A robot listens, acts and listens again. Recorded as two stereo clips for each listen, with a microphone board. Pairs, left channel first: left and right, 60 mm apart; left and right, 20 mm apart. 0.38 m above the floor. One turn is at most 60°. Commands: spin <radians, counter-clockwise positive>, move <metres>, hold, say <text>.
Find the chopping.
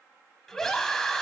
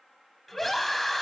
hold
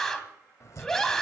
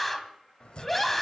spin 0.96
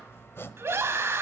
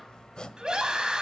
spin 0.87
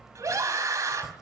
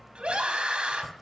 spin -0.17
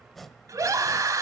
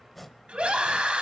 say Facing the chopping, 1 to 2 m away.